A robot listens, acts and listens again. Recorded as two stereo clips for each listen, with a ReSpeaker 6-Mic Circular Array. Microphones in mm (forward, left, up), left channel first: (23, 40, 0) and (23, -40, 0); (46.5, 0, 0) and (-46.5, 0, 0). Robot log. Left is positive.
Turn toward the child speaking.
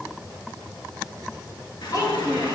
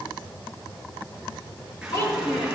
note: The child speaking: 55° left.
cmd yaw +55
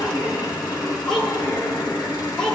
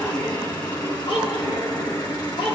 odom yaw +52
note: The child speaking is now 10° left.
cmd yaw +10
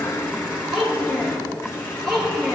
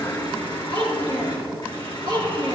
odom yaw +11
end: Facing the child speaking, over 4 m away.